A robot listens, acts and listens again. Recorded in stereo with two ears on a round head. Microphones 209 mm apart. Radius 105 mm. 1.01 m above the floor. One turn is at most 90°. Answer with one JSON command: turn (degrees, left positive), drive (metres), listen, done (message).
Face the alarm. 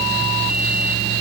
{"listen": true}
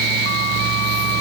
{"listen": true}
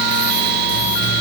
{"done": "I can't make out an alarm."}